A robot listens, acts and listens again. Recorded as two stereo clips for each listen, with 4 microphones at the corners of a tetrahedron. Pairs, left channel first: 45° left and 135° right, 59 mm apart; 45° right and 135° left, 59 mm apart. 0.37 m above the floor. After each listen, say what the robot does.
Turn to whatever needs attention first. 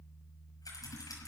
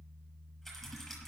Keep listening.
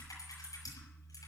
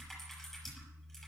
Keep listening.
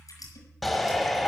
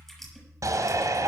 Turn 135° left.
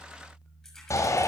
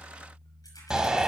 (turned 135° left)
Turn 60° left.
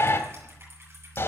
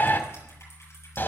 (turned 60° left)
Found it: a shout, straight ahead.